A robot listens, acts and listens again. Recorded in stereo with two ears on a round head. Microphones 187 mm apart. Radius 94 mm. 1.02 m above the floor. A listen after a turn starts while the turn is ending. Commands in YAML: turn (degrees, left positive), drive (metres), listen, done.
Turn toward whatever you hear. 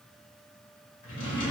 turn: 40
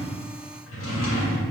turn: 95
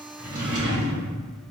turn: -35
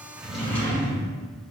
turn: 10
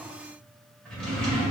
done: "Facing the drawer, 1 to 2 m away."